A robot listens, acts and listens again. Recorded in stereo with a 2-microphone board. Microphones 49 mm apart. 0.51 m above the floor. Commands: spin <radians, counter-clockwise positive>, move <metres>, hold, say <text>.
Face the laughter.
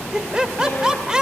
spin -0.52
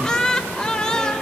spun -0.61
spin 0.26
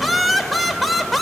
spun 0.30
say Facing the laughter, 2 to 4 m away.